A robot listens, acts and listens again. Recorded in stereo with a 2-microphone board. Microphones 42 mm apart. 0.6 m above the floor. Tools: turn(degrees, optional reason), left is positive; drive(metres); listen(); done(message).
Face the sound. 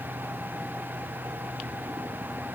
listen()
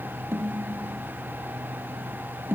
turn(degrees=-55, reason="The snare drum: about 55° right or 125° right.")
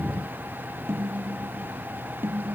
turn(degrees=-70, reason="So it is at 70° right.")
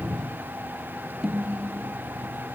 turn(degrees=-10, reason="The snare drum is now 10° right.")
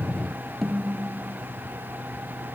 done("Found it: a snare drum, straight ahead.")